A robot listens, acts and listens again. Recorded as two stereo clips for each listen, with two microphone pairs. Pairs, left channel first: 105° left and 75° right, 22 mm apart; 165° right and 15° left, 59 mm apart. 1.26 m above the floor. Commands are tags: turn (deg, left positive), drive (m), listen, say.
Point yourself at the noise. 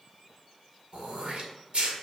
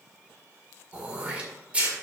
<turn deg="-50"/>
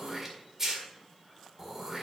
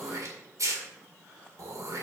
<say>Found it: throat clearing, straight ahead.</say>